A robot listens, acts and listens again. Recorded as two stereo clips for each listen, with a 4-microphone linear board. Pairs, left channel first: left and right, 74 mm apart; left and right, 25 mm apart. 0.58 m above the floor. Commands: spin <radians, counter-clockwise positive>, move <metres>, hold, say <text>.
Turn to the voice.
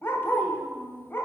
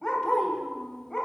spin 0.52
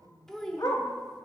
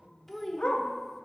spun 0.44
spin 0.17
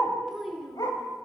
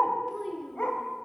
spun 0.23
say Found it: a child speaking, straight ahead.